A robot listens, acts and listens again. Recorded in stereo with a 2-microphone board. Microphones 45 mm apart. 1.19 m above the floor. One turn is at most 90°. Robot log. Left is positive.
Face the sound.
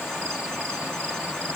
cmd idle
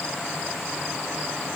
cmd idle
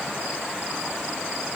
end: I can't make out anything.